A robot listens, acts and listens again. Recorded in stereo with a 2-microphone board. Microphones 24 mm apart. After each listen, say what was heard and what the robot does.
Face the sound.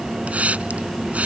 Turn 90° right.
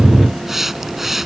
So it is at 15° right. Turn 15° right.
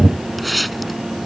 Facing the hiss.